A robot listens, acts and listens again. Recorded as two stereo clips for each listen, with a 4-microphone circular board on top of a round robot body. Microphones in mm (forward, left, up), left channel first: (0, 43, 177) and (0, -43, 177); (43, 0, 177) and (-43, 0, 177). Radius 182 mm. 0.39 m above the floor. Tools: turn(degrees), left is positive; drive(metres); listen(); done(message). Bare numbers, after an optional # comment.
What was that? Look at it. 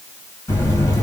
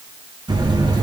# The buzzer: 155° left.
turn(155)
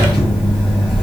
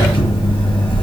done("Facing the buzzer, 1 to 2 m away.")